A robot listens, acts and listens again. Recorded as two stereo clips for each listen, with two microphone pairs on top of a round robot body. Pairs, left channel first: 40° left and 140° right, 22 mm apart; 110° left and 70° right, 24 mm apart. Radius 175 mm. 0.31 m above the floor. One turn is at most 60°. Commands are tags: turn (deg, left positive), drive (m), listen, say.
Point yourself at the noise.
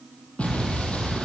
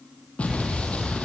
<turn deg="60"/>
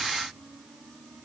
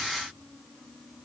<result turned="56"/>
<turn deg="20"/>
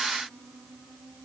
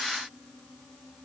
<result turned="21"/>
<say>Facing where the explosion came from. I can't hear it now.</say>